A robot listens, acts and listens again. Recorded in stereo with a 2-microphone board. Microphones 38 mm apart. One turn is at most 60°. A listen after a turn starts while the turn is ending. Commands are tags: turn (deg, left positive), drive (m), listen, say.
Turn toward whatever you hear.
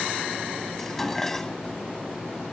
<turn deg="30"/>
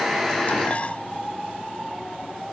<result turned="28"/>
<listen/>
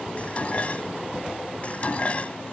<turn deg="60"/>
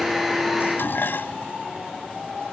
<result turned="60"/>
<turn deg="60"/>
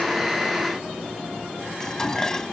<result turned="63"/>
<turn deg="15"/>
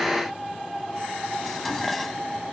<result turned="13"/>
<say>Found it: dishes clattering, straight ahead.</say>